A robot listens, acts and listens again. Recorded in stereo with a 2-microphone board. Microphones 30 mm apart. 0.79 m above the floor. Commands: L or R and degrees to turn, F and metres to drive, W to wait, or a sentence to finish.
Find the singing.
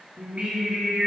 R35
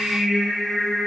L20
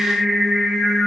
L30
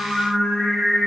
L30
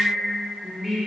Facing the singing.